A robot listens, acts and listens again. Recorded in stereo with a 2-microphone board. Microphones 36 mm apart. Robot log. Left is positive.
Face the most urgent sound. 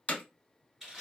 cmd idle
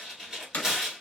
cmd idle
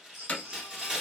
cmd yaw -90
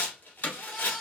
end: Found it: a baby crying, straight ahead, under 1 m away.